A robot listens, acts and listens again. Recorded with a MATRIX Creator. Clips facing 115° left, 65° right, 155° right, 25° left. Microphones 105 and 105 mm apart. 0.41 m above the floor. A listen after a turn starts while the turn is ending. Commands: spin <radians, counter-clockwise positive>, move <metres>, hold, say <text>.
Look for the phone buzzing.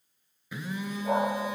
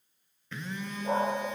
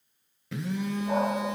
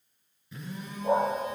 spin -2.97
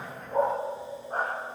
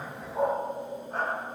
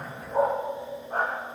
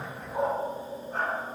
hold
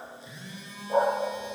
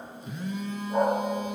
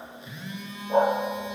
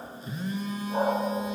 spin -0.52
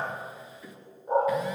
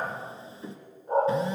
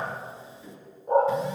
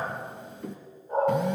say Facing the phone buzzing, 2 to 4 m away.